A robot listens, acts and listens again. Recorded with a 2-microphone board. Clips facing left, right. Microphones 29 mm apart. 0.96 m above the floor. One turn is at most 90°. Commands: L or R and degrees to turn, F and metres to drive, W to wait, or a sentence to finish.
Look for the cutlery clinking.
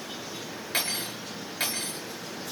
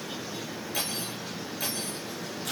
L50
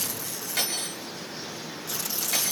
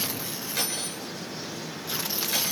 Facing the cutlery clinking, over 4 m away.